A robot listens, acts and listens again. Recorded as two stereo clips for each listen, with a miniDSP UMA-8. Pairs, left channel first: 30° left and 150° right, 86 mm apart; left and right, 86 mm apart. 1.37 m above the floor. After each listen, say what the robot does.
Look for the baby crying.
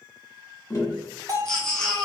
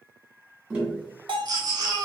Turn 50° right.
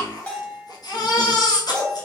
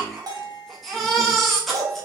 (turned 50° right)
Found it: a baby crying, straight ahead.